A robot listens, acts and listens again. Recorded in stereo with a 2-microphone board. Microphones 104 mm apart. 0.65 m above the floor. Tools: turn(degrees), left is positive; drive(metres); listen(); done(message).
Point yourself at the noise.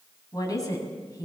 turn(degrees=35)
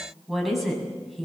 done("Found it: a woman speaking, straight ahead, over 4 m away.")